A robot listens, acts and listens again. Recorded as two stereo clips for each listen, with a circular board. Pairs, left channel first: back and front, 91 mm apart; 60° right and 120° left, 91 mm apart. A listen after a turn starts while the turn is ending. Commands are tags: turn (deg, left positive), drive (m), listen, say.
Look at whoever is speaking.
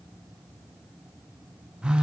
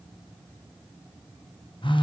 <listen/>
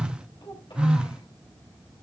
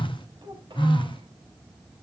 <turn deg="150"/>
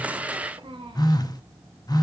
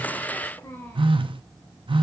<say>Found it: a child speaking, straight ahead.</say>